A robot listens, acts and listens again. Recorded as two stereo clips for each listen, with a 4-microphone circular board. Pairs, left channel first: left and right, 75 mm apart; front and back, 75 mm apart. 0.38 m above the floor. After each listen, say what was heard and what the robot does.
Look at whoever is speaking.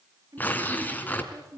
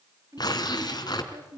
The woman speaking: 140° right. Turn 140° right.
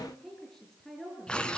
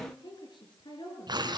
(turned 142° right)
Facing the woman speaking, over 4 m away.